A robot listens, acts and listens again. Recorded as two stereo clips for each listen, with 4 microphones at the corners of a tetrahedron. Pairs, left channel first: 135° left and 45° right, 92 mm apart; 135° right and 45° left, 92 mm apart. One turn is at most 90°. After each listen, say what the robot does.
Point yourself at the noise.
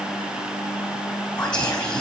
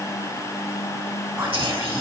Turn 90° left.
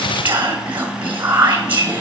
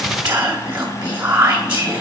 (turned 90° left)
Turn 15° left.
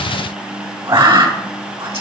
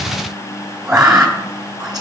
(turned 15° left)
Found it: whispering, straight ahead.